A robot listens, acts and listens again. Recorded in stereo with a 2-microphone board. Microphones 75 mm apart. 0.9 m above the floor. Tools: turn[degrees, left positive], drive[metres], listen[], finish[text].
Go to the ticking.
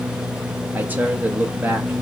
Action: listen[]
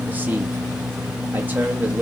Action: listen[]
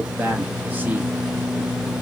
Action: finish[I can't make out ticking to turn to.]